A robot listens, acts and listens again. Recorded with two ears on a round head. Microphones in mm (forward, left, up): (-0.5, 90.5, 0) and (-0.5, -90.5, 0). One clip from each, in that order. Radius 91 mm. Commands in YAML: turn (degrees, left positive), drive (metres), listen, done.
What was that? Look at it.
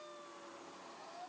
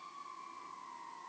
listen: true
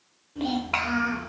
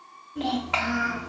turn: -30
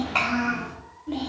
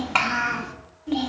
turn: -130
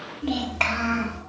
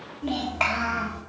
turn: 10
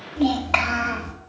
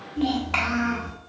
turn: 15
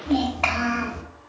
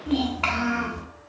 done: "Facing the child speaking."